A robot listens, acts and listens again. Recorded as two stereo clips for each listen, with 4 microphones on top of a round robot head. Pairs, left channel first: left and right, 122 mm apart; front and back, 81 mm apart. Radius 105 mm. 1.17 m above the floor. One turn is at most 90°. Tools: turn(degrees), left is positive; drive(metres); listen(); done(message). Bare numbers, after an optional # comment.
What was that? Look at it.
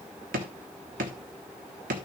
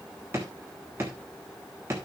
# The drawer: 110° right.
turn(-90)
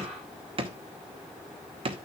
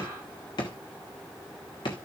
# The drawer is now 45° right.
turn(-45)
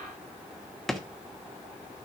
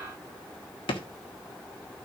done("Facing the drawer, 1 to 2 m away.")